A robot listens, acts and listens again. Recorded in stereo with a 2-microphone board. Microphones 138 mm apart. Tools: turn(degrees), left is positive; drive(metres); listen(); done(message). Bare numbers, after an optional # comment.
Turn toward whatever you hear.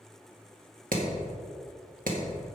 turn(-90)
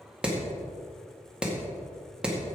done("Facing the hammering.")